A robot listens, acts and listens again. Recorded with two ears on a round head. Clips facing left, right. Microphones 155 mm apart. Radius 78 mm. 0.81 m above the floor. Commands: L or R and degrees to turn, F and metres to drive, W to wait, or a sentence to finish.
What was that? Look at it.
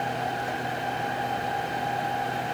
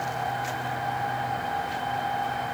W
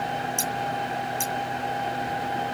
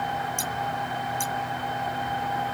L25
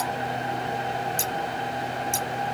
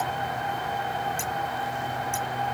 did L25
L135
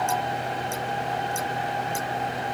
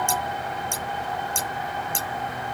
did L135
R30
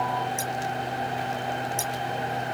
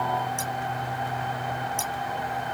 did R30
L10
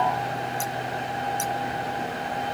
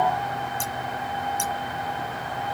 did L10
Found it: scissors, straight ahead.